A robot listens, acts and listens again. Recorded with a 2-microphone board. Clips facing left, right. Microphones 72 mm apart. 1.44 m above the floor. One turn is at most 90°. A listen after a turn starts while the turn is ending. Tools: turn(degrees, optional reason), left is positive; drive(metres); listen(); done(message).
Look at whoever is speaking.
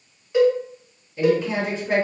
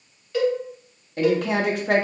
turn(degrees=-65, reason="The woman speaking: about 65° right or 115° right.")
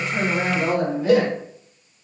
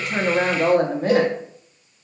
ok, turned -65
turn(degrees=-45, reason="So it is at 45° right.")
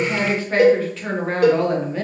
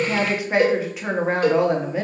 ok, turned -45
turn(degrees=-15, reason="The woman speaking is now 15° right.")
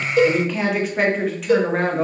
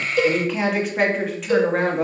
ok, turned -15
done("Facing the woman speaking.")